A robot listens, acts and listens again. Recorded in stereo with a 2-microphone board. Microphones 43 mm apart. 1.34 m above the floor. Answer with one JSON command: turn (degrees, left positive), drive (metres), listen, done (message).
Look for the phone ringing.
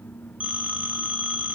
{"turn": -30}
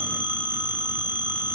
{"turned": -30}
{"turn": -120}
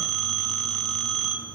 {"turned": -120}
{"done": "Found it: a phone ringing, straight ahead."}